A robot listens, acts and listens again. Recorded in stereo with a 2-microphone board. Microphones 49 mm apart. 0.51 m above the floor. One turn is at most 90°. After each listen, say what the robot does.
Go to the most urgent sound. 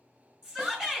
Turn 30° right.
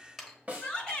Turn 20° left.
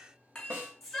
Drive 1.0 m forward.
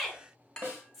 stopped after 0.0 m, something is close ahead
Something is in my way. I am facing the shout but have not reached it.